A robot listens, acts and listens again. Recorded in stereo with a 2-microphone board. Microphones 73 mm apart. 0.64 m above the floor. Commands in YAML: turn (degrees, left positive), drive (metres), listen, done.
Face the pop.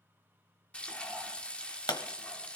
turn: 75
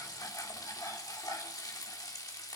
listen: true
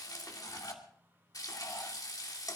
done: "I heard a pop, but can't make it out now. It was about straight ahead or 30° left."